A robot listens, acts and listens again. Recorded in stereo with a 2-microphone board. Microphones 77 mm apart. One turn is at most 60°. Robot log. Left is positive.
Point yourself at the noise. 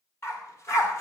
note: The dog barking: about 40° left or 140° left.
cmd yaw +40
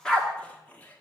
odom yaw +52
note: So it is at 10° left.
cmd yaw +10
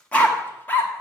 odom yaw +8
note: The dog barking is now 25° left.
cmd yaw +25
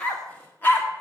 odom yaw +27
note: The dog barking is now 25° left.
cmd yaw +25
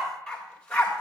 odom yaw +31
note: The dog barking is now 15° left.
cmd yaw +15
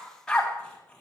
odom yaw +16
end: Found it: a dog barking, straight ahead, 2 to 4 m away.